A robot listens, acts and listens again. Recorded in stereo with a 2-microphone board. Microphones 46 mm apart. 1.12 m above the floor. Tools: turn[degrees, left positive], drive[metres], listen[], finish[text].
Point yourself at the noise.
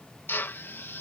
Thought: The drill: about 50° left or 130° left.
Action: turn[50]
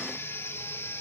Action: listen[]
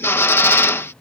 Thought: So it is at 75° left.
Action: turn[75]
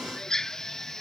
Thought: The drill is now 15° left.
Action: turn[15]
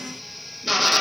Action: finish[Facing the drill.]